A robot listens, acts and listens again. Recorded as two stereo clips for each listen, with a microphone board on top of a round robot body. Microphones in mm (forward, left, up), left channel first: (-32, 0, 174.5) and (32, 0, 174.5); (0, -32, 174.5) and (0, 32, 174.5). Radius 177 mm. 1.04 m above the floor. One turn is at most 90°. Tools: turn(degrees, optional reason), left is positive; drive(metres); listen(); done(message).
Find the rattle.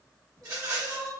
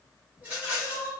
turn(degrees=25, reason="The rattle: 25° left.")
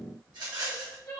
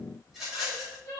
done("Facing the rattle.")